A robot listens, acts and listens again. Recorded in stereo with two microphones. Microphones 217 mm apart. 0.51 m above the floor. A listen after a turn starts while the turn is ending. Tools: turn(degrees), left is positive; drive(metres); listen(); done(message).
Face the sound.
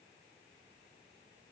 listen()
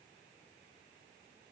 listen()
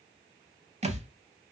turn(degrees=-30)
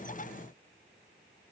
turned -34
listen()
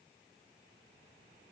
done("I heard a thud, but can't make it out now. It was about straight ahead or 115° right.")